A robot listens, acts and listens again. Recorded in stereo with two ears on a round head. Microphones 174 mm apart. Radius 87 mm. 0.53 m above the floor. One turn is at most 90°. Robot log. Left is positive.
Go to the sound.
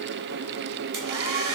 cmd yaw -90
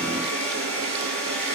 cmd fwd 1.0
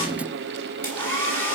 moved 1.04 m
note: The hair dryer is now 10° left.
cmd yaw +10
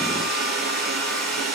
cmd fwd 1.0
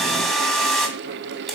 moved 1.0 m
cmd fwd 1.0
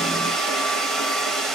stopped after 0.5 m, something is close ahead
end: Arrived at the hair dryer, straight ahead.